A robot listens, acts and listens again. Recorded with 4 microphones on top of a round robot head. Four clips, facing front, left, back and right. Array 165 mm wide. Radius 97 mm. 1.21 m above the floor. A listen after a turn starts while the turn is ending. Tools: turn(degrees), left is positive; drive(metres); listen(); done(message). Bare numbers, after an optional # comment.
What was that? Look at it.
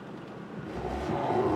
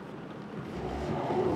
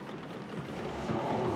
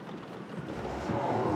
# The zipper: 15° left.
turn(15)
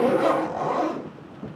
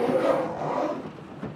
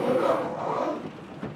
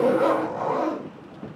done("Facing the zipper.")